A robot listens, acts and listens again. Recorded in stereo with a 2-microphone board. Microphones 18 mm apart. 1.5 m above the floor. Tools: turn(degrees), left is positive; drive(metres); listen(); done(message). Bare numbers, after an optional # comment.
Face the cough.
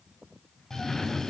# The cough: about 30° left or 150° left.
turn(30)
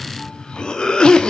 # So it is at 125° left.
turn(125)
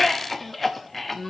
# The cough is now 10° left.
turn(10)
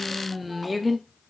done("Found it: a cough, straight ahead, under 1 m away.")